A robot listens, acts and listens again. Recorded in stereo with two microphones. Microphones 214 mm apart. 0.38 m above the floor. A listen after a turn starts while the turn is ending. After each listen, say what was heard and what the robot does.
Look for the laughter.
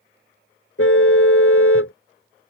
Keep listening.
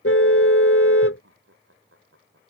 Turn 90° right.
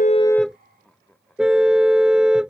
Facing the laughter.